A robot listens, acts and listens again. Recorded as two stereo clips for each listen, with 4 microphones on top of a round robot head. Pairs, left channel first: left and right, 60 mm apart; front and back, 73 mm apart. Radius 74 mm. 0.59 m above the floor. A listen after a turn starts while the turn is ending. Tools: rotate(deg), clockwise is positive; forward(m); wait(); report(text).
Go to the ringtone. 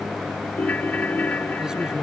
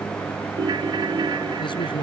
rotate(-155)
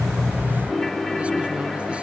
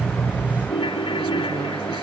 forward(1.0)
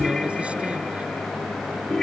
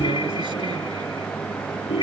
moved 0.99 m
forward(1.0)
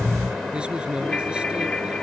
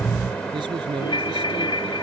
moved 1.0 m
rotate(-10)
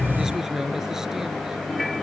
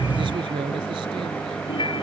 forward(1.0)
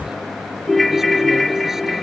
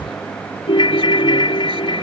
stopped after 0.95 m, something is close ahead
report("Arrived at the ringtone, straight ahead.")